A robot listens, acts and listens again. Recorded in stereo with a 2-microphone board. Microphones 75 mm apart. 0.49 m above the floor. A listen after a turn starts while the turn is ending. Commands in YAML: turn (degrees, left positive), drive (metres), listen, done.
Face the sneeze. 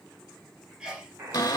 turn: -30
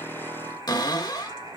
listen: true
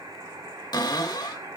done: "I heard a sneeze, but can't make it out now. It was about 20° left or 140° right."